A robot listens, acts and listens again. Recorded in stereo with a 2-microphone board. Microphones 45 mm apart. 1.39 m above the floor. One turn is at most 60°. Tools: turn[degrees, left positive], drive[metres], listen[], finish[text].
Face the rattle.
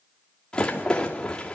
Thought: The rattle: about 20° left or 160° left.
Action: turn[20]
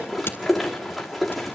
Action: finish[Facing the rattle, 2 to 4 m away.]